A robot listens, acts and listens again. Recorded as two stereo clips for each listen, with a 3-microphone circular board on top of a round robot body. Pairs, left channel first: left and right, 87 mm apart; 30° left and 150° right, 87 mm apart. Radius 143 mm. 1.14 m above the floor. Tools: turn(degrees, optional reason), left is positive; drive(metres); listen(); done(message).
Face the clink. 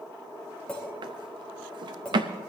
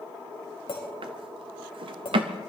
turn(degrees=10, reason="The clink: 10° left.")
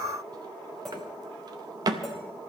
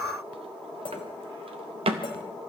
done("Found it: a clink, straight ahead, 2 to 4 m away.")